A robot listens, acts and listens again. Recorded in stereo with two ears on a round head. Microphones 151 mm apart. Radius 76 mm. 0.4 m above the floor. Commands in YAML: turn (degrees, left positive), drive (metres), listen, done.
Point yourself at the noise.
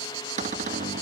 turn: -45
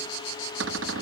turn: -85
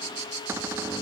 listen: true
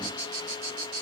listen: true
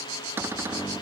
turn: -15
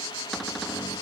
listen: true
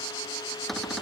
done: "Found it: a cupboard door, straight ahead."